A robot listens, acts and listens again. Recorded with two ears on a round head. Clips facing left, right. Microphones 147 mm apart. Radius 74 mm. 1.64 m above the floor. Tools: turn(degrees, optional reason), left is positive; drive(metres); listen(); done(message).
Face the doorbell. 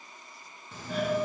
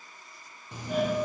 turn(degrees=-30)
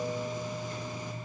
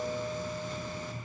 turn(degrees=15, reason="So it is at 15° left.")
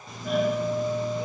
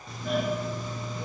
done("Found it: a doorbell, straight ahead.")